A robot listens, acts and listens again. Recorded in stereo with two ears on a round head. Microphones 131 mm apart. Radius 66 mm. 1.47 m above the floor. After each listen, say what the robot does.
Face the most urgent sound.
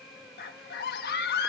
Turn 70° left.
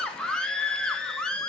Facing the scream, 2 to 4 m away.